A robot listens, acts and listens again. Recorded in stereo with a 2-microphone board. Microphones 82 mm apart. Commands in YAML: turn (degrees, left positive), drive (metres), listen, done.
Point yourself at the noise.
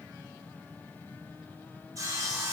turn: -45
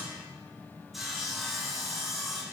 done: "Found it: sawing, straight ahead, under 1 m away."